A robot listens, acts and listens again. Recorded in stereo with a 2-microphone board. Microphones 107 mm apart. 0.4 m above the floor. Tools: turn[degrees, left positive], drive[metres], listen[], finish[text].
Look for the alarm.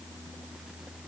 Action: listen[]
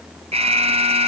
Thought: The alarm: about 75° right or 105° right.
Action: turn[-75]
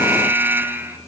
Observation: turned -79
Thought: So it is at 20° right.
Action: turn[-20]
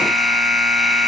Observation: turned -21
Action: finish[Facing the alarm.]